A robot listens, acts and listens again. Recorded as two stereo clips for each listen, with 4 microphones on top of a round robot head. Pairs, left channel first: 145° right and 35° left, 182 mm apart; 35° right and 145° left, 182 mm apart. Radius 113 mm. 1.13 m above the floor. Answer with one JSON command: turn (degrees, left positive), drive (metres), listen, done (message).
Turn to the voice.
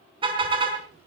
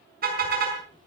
{"turn": 30}
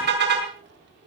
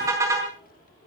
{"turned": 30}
{"turn": 10}
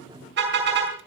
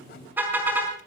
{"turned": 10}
{"turn": 15}
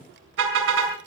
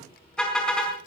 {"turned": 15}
{"done": "Found it: a child speaking, straight ahead, 2 to 4 m away."}